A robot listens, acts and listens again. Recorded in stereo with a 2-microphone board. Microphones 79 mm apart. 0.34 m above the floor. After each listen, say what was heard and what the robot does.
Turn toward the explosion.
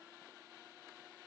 Keep listening.
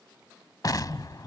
The explosion: about 55° left or 125° left. Turn 55° left.
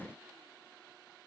Keep listening.
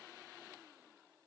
I heard an explosion, but can't make it out now. It was about straight ahead or 70° left.